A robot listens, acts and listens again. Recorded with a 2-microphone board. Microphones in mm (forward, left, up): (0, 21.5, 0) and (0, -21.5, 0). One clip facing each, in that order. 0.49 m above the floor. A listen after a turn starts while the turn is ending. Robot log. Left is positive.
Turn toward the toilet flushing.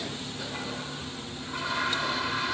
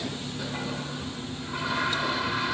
cmd yaw -30
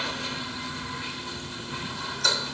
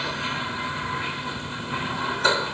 note: So it is at 140° right.
cmd yaw -140
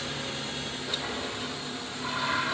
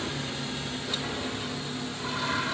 note: The toilet flushing is now 10° left.
cmd yaw +10
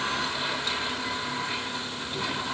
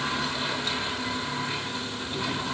end: Found it: a toilet flushing, straight ahead.